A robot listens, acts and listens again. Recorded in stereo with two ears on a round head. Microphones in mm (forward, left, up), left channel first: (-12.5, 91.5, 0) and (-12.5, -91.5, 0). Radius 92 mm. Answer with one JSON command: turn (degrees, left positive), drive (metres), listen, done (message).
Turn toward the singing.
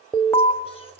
{"turn": 30}
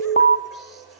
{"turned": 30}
{"done": "Facing the singing."}